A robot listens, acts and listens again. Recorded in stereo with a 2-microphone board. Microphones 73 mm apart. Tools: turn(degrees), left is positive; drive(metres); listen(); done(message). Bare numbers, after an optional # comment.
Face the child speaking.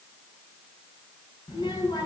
turn(90)
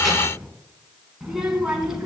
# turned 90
# So it is at 10° right.
turn(-10)
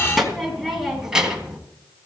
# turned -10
# The child speaking is now 10° right.
turn(-10)
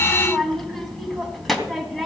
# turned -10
done("Facing the child speaking, 2 to 4 m away.")